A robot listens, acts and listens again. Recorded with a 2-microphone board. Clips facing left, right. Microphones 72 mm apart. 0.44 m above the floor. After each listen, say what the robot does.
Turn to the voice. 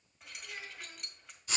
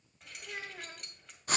Turn 65° right.
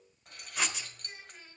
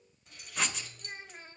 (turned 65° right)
Turn 40° right.
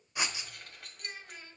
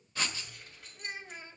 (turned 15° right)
Turn 20° right.
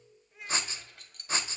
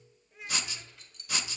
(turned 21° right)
Facing the child speaking, under 1 m away.